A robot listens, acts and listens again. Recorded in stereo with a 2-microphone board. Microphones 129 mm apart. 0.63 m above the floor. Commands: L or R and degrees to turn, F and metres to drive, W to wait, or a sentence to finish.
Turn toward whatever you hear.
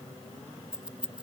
R30
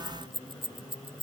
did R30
R140
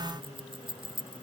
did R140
R40
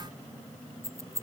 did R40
R25
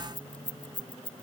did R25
L10
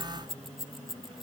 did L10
Found it: keys jangling, straight ahead.